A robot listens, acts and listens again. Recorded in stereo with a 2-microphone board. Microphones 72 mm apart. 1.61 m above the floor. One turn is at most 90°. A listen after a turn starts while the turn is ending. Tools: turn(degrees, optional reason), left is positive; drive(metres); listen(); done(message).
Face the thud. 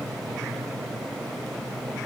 listen()
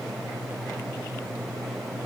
listen()
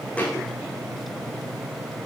turn(degrees=20, reason="The thud: about 20° left or 160° left.")
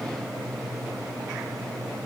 listen()
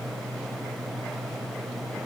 done("I heard a thud, but can't make it out now. It was about straight ahead or 140° left.")